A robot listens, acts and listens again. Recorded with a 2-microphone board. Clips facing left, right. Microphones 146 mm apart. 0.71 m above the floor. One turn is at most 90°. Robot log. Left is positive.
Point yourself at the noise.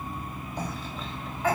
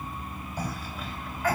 note: The cough: about 25° left or 155° left.
cmd yaw +25
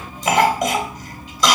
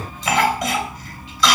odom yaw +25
note: So it is at 130° left.
cmd yaw +90
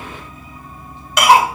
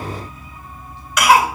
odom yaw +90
note: The cough is now 30° left.
cmd yaw +30
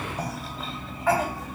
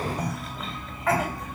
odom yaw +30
end: Facing the cough, 2 to 4 m away.